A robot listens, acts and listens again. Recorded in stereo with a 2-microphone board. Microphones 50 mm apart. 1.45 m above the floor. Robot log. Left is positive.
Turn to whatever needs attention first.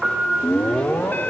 note: The alarm: about 40° left or 140° left.
cmd yaw +40
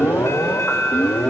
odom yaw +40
note: So it is at 100° left.
cmd yaw +100
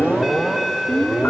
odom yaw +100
end: Found it: an alarm, straight ahead, under 1 m away.